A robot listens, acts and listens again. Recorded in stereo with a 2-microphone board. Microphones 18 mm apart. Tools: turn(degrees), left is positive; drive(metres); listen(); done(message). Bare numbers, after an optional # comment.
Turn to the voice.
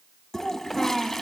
turn(-30)
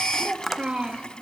# So it is at 125° right.
turn(-125)
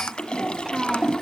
# The child speaking is now 15° right.
turn(-15)
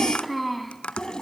done("Found it: a child speaking, straight ahead, 2 to 4 m away.")